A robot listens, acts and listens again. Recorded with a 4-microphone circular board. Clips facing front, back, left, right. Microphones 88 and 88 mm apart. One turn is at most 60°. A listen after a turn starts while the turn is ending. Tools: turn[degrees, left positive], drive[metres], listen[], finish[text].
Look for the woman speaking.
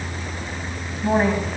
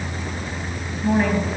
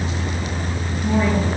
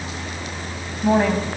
Thought: The woman speaking: 65° right.
Action: turn[-60]
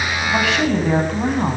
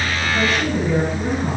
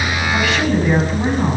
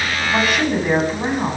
Thought: The woman speaking is now 10° right.
Action: turn[-10]
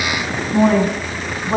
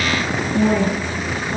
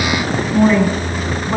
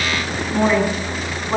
Action: finish[Facing the woman speaking.]